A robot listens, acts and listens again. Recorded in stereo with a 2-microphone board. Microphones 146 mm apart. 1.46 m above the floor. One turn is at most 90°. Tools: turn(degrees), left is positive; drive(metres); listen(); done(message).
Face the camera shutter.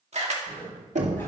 turn(degrees=-50)
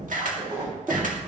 turn(degrees=-75)
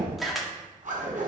done("Facing the camera shutter, 2 to 4 m away.")